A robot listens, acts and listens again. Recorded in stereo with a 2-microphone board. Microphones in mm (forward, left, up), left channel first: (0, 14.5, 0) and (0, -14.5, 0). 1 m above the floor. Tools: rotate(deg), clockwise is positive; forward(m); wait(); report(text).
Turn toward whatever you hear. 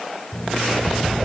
rotate(-25)
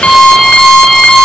rotate(-135)
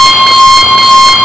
rotate(-10)
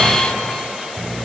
wait()
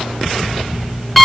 report("Found it: an alarm clock, straight ahead, over 4 m away.")